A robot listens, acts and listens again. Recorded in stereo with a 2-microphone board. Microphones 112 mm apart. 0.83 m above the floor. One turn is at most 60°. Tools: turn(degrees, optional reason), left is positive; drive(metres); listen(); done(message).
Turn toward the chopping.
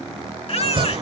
turn(degrees=-50, reason="The chopping: about 50° right or 130° right.")
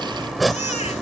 done("Facing the chopping.")